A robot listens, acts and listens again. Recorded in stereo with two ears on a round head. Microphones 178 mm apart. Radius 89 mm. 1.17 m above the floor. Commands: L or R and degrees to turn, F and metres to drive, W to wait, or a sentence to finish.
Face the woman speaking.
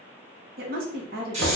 R50
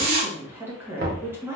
R15
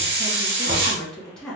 Found it: a woman speaking, straight ahead.